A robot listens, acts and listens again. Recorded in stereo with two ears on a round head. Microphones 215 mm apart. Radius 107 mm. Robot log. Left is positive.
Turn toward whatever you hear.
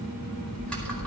cmd yaw +30
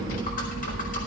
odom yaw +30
note: So it is at 145° left.
cmd yaw +145
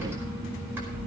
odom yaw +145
note: The typing on a keyboard is now 10° right.
cmd yaw -10
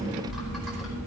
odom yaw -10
end: Found it: typing on a keyboard, straight ahead, over 4 m away.